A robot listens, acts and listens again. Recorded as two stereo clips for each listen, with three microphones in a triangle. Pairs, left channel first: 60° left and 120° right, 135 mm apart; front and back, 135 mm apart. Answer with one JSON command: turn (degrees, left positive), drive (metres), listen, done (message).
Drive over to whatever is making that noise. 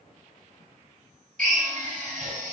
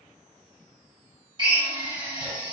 {"turn": -125}
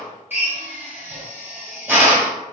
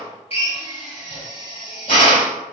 {"turn": -45}
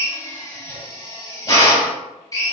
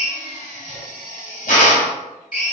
{"drive": 1.0}
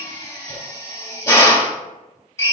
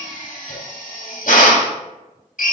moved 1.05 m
{"turn": -10}
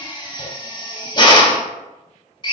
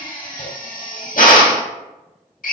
{"drive": 1.0}
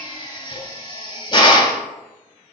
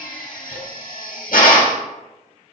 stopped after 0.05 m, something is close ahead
{"done": "Arrived at the drill, straight ahead."}